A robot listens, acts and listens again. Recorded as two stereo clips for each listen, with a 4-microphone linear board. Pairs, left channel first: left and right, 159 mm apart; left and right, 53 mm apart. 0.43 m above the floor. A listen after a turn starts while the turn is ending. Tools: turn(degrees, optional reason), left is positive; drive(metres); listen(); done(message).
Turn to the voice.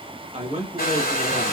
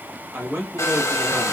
turn(degrees=-45, reason="The man speaking: about 45° right or 135° right.")
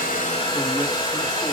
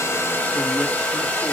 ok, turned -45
listen()
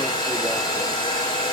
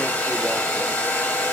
listen()
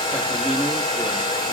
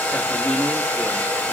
done("I heard a man speaking, but can't make it out now. It was about straight ahead or 90° right.")